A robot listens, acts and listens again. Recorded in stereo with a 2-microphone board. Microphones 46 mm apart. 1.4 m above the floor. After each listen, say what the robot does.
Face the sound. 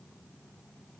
Keep listening.
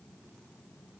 Keep listening.
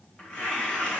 Turn 25° left.
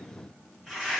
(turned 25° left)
Facing the tearing paper.